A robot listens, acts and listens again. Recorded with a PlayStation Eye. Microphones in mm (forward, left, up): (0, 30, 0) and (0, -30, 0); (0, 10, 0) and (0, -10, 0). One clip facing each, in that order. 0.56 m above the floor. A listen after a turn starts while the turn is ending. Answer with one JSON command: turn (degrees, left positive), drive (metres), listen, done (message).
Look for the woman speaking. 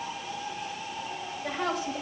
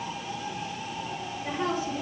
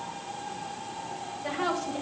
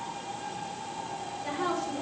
{"turn": 90}
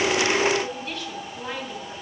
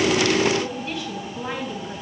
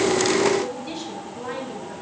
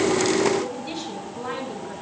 {"turn": -10}
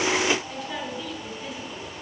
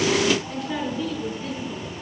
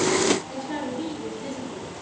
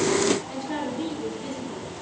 {"done": "Found it: a woman speaking, straight ahead."}